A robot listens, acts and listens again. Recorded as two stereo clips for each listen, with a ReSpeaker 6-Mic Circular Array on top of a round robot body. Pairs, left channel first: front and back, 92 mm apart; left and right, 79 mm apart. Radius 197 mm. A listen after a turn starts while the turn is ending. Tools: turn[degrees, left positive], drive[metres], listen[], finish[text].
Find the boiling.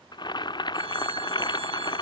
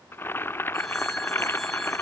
Thought: The boiling: 30° left.
Action: turn[30]
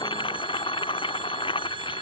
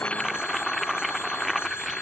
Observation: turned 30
Action: finish[Found it: boiling, straight ahead.]